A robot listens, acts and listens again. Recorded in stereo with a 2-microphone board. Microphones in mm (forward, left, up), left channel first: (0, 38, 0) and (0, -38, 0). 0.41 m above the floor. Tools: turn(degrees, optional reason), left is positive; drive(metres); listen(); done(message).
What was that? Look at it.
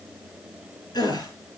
turn(degrees=65, reason="The gasp: about 65° left or 115° left.")
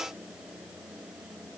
listen()
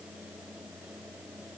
done("I heard a gasp, but can't make it out now. It was about straight ahead or 50° left.")